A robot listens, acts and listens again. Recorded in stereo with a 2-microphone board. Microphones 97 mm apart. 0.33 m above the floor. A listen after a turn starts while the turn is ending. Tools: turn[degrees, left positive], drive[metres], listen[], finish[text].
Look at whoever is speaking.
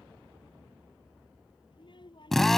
Thought: The child speaking: about 55° left or 125° left.
Action: turn[55]
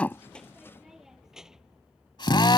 Action: finish[Found it: a child speaking, straight ahead.]